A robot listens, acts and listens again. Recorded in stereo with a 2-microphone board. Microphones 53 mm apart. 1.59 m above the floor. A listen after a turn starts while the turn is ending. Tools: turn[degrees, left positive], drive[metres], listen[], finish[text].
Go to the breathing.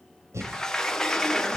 Thought: The breathing: about 70° right or 110° right.
Action: turn[-70]
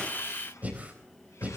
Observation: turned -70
Thought: So it is at 35° right.
Action: turn[-35]
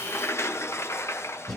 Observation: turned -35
Action: drive[1.0]
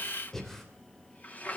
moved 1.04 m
Action: drive[1.0]
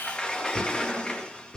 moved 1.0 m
Thought: The breathing is now 10° left.
Action: turn[10]
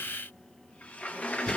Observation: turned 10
Action: listen[]
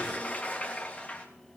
Action: listen[]
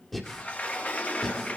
Action: drive[1.0]
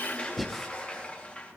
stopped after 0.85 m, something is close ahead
Action: finish[I am next to the breathing.]